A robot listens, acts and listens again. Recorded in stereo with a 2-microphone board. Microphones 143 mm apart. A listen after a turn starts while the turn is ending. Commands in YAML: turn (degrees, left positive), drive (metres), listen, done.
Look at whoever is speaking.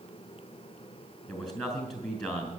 turn: 30
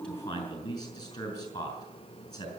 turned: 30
turn: 150
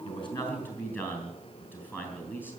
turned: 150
turn: 15
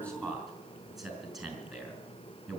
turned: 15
done: "Facing the man speaking."